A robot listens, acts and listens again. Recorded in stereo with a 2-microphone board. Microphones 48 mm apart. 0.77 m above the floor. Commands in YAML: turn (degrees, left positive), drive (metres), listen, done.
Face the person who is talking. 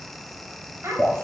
turn: -90
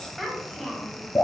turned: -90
turn: 10
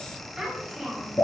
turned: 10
done: "Facing the child speaking."